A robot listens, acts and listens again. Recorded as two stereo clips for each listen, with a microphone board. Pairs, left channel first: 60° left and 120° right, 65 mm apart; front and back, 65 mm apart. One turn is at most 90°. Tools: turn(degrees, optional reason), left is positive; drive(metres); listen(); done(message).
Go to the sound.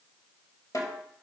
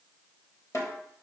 turn(degrees=35, reason="The snare drum: 35° left.")
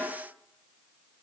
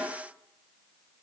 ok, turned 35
drive(metres=1.0)
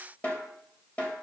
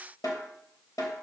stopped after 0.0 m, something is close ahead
done("Something is in my way. I am facing the snare drum but have not reached it.")